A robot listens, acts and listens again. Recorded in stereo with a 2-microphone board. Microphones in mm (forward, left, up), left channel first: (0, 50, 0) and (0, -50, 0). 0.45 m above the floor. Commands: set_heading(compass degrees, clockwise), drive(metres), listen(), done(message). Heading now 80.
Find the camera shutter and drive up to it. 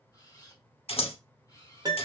set_heading(45)
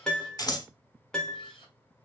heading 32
set_heading(302)
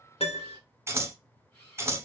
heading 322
set_heading(302)
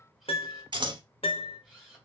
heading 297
drive(1.0)
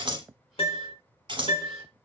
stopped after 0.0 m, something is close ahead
listen()
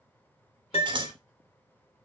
listen()
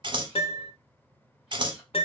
done("Facing where the camera shutter came from. I can't hear it now. I did not reach it.")